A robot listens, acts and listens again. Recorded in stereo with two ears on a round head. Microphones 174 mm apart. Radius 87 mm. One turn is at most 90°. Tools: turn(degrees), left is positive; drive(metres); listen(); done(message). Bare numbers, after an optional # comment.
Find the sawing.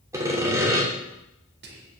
# The sawing: about 15° right or 165° right.
turn(-15)
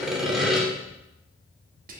done("Facing the sawing, 2 to 4 m away.")